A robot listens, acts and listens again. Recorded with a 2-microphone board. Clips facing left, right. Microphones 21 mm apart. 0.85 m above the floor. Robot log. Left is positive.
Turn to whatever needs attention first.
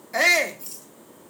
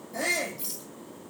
note: The shout: about 60° left or 120° left.
cmd yaw +60
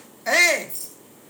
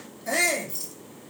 note: So it is at 45° left.
cmd yaw +45
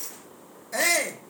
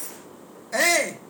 note: The shout is now 15° right.
cmd yaw -15
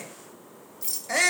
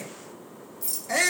end: Found it: a shout, straight ahead.